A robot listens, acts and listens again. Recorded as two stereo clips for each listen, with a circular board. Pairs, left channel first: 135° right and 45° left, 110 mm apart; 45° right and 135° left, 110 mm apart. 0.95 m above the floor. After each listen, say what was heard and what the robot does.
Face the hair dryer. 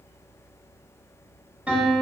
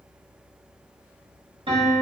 Keep listening.
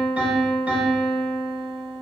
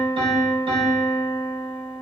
Keep listening.
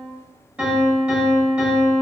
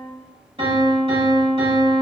I can't make out a hair dryer, only a piano.